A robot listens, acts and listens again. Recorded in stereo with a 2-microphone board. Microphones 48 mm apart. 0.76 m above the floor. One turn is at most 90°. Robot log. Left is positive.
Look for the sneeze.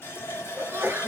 note: The sneeze: about 55° right or 125° right.
cmd yaw -55
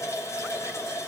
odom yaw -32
cmd idle
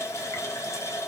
end: I heard a sneeze, but can't make it out now. It was about 25° right or 90° right.